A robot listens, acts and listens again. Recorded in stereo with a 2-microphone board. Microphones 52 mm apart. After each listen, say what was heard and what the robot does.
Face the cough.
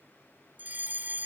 Keep listening.
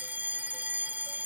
Keep listening.
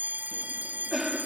Turn 30° right.
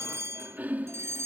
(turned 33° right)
So it is at 145° right. Turn 145° right.
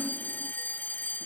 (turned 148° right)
Keep listening.
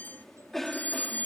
Facing the cough.